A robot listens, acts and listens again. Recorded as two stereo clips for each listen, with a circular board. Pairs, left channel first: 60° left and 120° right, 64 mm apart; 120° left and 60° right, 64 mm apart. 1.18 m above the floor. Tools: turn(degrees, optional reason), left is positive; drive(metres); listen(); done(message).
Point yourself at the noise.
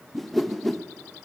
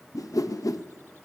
turn(degrees=150, reason="The whoosh: 150° left.")
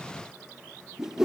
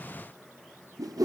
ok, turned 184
turn(degrees=-35, reason="The whoosh is now 35° right.")
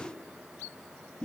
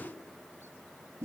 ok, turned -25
turn(degrees=-10, reason="The whoosh is now 10° right.")
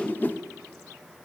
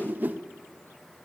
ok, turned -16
done("Found it: a whoosh, straight ahead.")